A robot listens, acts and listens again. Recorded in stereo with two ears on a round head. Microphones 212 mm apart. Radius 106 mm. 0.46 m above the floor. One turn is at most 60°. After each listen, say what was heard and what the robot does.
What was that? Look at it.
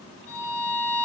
The violin: about 50° left or 130° left. Turn 50° left.
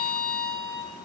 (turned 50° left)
So it is at 10° left. Turn 10° left.
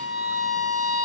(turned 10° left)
Found it: a violin, straight ahead.